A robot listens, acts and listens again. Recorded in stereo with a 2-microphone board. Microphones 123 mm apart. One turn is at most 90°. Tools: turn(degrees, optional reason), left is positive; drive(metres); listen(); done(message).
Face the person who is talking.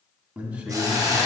turn(degrees=-30)
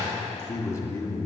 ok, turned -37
turn(degrees=25, reason="So it is at 25° left.")
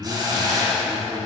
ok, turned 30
done("Facing the man speaking.")